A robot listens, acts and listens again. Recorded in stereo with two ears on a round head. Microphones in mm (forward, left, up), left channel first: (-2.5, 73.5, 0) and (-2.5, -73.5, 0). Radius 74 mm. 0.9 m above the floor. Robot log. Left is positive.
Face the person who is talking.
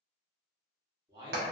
note: The man speaking: about 30° right or 150° right.
cmd yaw -30
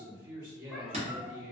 note: So it is at 120° right.
cmd yaw -120
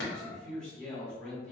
end: Facing the man speaking.